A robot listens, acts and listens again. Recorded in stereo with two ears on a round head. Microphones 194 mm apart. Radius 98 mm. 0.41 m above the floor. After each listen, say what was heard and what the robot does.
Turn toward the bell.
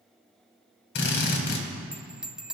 Turn 30° right.
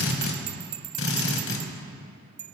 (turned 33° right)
So it is at 145° right. Turn 145° right.
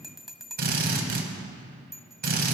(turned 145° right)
Facing the bell.